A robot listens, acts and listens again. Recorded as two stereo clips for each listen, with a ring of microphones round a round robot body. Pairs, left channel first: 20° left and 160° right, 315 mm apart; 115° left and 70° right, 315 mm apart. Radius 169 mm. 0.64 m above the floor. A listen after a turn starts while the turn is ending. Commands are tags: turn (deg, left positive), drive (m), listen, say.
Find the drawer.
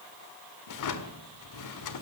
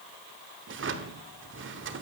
<turn deg="-10"/>
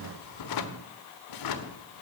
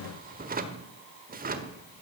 <say>Found it: a drawer, straight ahead.</say>